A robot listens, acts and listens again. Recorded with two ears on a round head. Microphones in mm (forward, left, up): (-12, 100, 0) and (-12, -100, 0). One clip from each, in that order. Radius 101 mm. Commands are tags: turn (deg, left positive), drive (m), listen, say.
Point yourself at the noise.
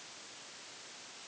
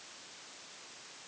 <listen/>
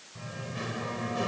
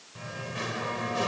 <turn deg="-35"/>
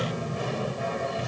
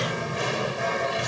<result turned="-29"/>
<turn deg="-115"/>
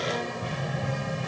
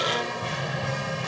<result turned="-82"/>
<turn deg="-35"/>
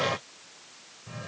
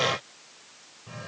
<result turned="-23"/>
<turn deg="-10"/>
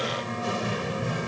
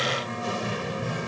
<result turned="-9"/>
<say>Found it: singing, straight ahead.</say>